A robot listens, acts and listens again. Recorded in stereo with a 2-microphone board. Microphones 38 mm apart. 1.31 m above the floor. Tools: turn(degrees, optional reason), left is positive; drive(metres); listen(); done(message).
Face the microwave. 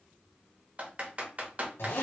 listen()
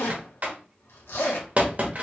listen()
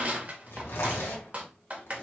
done("I can't make out a microwave, only typing on a keyboard and a zipper.")